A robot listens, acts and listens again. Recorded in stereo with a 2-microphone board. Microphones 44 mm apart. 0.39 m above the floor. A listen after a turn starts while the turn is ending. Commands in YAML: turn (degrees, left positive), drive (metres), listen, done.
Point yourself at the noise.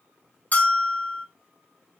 turn: 35
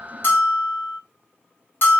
turn: 105
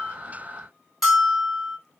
done: "Found it: a bell, straight ahead, 1 to 2 m away."